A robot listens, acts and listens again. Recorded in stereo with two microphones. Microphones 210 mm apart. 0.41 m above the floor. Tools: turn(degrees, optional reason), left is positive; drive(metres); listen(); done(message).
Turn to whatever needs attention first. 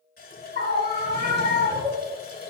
turn(degrees=-55, reason="The scream: about 55° right or 125° right.")
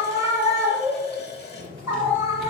turn(degrees=-15, reason="So it is at 15° right.")
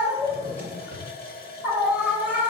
done("Found it: a scream, straight ahead.")